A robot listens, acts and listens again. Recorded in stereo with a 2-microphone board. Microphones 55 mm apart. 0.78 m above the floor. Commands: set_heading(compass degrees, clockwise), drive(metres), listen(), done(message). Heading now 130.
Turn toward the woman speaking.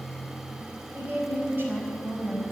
set_heading(175)
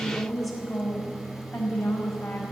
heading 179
done("Facing the woman speaking.")